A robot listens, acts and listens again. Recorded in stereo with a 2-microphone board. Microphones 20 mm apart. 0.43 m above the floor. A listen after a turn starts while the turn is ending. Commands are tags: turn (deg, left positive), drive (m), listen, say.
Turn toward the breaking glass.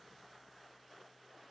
<listen/>
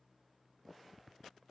<listen/>
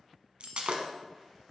<turn deg="-75"/>
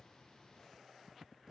<listen/>
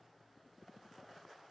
<say>I heard breaking glass, but can't make it out now. It was about straight ahead or 30° right.</say>